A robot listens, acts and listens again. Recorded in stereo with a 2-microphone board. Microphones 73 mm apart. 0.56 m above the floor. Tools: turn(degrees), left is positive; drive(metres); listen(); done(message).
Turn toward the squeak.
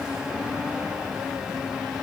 listen()
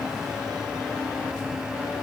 listen()
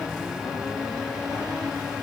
done("I can't make out a squeak.")